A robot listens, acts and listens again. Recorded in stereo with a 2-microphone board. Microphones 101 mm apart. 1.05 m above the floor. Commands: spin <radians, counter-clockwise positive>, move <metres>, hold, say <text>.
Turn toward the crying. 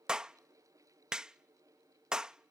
hold
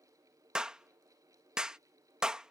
hold
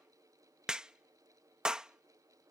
say I can't make out crying, only a clap.